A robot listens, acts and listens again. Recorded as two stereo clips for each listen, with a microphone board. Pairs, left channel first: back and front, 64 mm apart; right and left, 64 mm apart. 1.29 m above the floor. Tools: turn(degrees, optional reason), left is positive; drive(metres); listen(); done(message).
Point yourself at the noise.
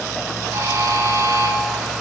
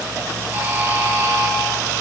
turn(degrees=35, reason="The buzzer: 35° left.")
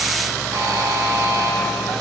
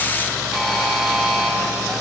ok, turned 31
done("Facing the buzzer.")